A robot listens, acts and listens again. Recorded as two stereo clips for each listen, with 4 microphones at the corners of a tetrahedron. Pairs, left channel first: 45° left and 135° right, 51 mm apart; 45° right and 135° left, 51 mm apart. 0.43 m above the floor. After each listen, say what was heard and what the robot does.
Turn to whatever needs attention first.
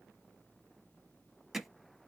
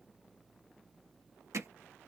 Keep listening.
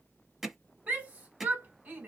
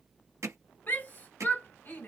The shout: 85° right. Turn 85° right.
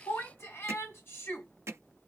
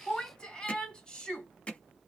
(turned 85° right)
The shout is now 25° left. Turn 25° left.
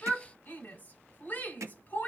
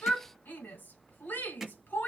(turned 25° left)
Facing the shout.